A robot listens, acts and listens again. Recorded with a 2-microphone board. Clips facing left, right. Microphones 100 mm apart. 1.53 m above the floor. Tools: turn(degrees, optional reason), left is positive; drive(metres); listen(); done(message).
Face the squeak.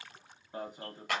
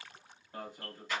listen()
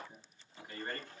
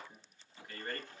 listen()
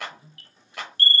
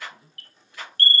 done("I can't make out a squeak, only a clap and an alarm.")